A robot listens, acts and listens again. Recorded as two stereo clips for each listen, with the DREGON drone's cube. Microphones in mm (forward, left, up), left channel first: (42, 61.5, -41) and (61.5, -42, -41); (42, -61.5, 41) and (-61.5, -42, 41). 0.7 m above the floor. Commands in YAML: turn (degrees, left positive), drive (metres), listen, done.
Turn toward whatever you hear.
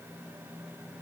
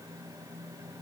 listen: true
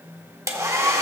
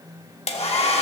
turn: -20
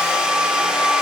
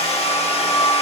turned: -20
done: "Facing the hair dryer."